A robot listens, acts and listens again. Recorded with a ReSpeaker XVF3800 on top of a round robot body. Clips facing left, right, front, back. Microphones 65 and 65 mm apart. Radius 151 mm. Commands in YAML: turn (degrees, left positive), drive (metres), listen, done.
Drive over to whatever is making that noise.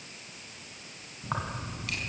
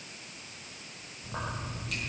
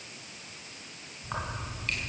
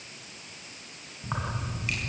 turn: 100
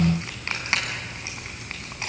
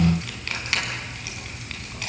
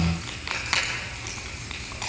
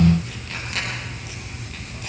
turn: 25
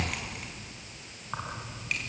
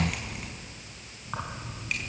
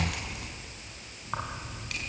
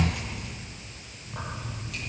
drive: 1.0
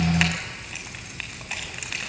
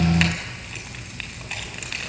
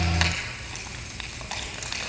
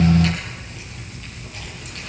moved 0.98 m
drive: 1.0
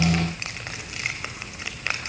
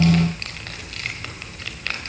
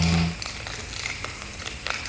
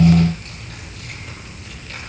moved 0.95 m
turn: 15
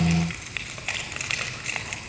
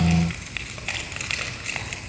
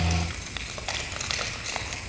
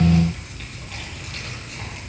drive: 1.0
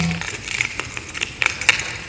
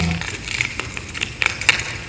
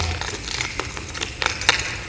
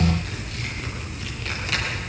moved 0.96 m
drive: 1.0
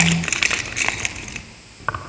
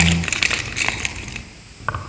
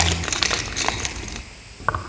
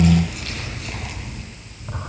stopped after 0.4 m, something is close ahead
done: "Arrived at the keys jangling, straight ahead."